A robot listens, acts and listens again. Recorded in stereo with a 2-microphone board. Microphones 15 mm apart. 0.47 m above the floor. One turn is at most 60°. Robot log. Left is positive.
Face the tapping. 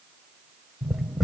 note: The tapping: about 20° right or 160° right.
cmd yaw -20
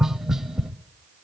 note: So it is at 135° right.
cmd yaw -60
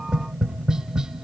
note: The tapping is now 85° right.
cmd yaw -60
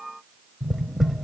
note: The tapping is now 10° right.
cmd yaw -10
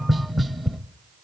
end: Found it: tapping, straight ahead, 1 to 2 m away.